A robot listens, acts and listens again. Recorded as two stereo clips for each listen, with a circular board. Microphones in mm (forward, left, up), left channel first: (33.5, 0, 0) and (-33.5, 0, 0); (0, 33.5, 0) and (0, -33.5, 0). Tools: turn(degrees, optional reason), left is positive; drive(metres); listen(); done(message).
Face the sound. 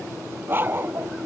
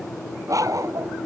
turn(degrees=-120, reason="The dog barking: 120° right.")
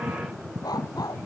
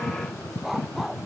done("Facing the dog barking.")